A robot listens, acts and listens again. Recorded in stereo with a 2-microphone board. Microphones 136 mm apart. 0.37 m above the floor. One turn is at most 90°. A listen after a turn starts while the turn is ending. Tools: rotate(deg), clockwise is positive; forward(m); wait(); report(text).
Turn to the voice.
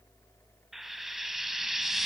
wait()
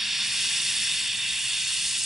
wait()
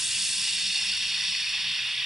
report("I can't make out anyone speaking to turn to.")